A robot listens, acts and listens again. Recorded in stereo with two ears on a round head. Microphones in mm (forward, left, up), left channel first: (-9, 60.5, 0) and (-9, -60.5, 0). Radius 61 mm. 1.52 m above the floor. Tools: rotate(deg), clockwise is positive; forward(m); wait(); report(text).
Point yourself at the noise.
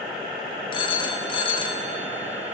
rotate(-40)
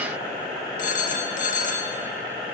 rotate(-95)
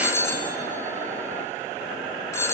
rotate(-25)
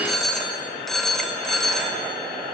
report("Facing the phone ringing.")